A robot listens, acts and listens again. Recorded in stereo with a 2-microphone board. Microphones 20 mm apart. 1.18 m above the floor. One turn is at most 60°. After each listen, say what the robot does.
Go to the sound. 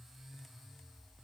Keep listening.
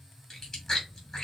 Turn 30° left.
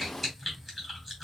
Drive 1.0 m forward.
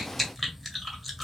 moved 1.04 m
Drive 1.0 m forward.
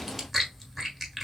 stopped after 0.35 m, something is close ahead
I am next to the chewing.